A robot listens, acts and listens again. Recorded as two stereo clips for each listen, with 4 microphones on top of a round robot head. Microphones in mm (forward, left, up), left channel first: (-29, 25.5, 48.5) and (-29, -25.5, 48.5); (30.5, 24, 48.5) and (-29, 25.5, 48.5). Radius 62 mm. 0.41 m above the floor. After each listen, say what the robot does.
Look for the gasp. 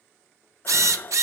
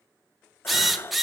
Turn 45° left.
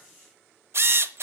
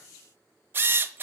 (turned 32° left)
Turn 15° left.
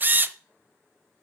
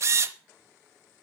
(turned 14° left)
Facing where the gasp came from. I can't hear it now.